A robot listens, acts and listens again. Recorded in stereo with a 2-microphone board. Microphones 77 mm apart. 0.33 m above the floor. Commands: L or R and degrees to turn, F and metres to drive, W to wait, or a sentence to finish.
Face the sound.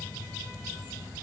W
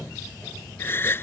L30
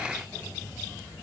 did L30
W
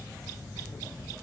I heard a gasp, but can't make it out now. It was about straight ahead or 120° left.